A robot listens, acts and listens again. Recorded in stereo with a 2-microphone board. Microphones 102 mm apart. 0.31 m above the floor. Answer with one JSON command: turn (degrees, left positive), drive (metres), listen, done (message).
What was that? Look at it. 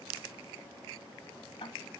{"turn": 55}
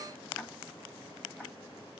{"listen": true}
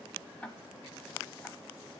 {"turn": 15}
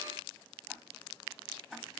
{"done": "Facing the ticking, 1 to 2 m away."}